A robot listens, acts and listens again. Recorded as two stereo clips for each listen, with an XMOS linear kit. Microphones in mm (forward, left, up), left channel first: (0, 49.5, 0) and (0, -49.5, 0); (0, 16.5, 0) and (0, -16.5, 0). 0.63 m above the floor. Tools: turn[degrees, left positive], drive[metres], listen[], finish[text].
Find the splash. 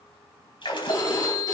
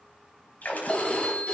Thought: The splash: about 55° left or 125° left.
Action: turn[55]
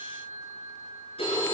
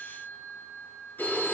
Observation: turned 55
Action: listen[]
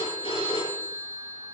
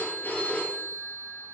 Action: finish[I heard a splash, but can't make it out now. It was about straight ahead or 70° left.]